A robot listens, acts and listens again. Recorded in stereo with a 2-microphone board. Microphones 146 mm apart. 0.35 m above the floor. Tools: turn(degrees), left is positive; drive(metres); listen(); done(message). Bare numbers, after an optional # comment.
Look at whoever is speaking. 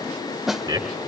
# The man speaking: about 30° right or 150° right.
turn(-30)
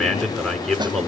done("Found it: a man speaking, straight ahead, over 4 m away.")